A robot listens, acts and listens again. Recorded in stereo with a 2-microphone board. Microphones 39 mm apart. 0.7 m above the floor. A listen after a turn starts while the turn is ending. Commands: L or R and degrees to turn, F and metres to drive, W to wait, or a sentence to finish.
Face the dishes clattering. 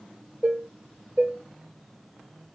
R35
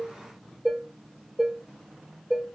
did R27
Found it: dishes clattering, straight ahead, 1 to 2 m away.